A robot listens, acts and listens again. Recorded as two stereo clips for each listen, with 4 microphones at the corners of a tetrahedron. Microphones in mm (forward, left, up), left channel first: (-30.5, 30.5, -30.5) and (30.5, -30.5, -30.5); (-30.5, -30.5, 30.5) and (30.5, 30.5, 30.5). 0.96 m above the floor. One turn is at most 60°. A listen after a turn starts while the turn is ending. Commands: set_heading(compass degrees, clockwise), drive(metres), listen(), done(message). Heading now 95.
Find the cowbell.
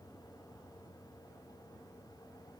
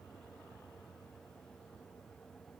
listen()
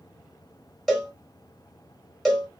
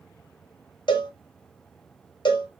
set_heading(155)
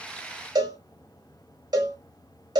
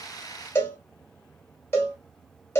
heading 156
set_heading(216)
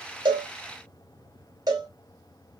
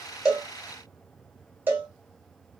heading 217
set_heading(232)
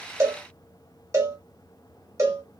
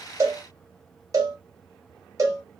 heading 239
done("Facing the cowbell, 1 to 2 m away.")